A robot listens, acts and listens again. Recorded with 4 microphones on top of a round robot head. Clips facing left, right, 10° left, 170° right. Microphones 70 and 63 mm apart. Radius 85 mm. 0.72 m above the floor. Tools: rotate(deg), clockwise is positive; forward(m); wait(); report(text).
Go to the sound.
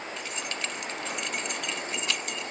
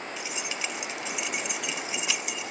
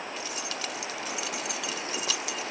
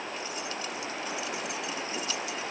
forward(1.0)
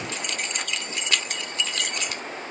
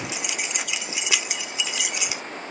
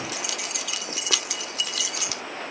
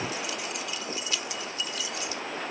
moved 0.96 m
rotate(10)
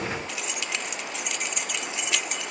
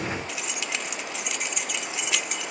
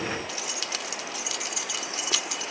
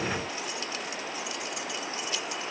forward(1.0)
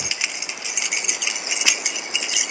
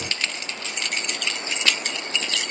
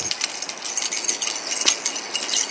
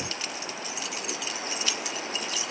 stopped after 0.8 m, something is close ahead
rotate(-10)
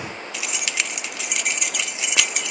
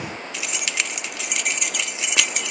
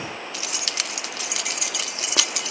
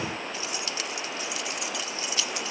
report("Arrived at the keys jangling, straight ahead.")